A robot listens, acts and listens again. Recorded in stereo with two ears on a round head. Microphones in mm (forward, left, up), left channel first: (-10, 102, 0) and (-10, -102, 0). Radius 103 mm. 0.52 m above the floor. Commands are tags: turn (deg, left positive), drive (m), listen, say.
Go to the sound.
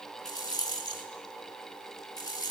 <turn deg="15"/>
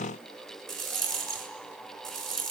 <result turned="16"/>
<drive m="1.0"/>
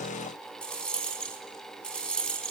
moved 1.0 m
<drive m="1.0"/>
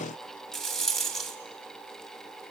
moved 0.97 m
<drive m="1.0"/>
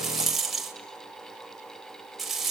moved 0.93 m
<drive m="1.0"/>
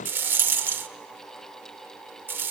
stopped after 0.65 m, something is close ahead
<turn deg="-10"/>
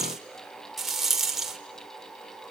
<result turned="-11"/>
<say>Arrived at the rattle, straight ahead.</say>